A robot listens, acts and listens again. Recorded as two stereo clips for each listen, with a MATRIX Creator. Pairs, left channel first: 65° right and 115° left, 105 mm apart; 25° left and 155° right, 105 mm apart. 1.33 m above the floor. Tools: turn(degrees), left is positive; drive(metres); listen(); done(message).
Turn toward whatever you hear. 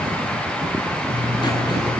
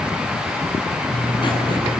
turn(degrees=-20)
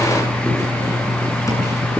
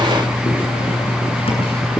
done("Facing the writing.")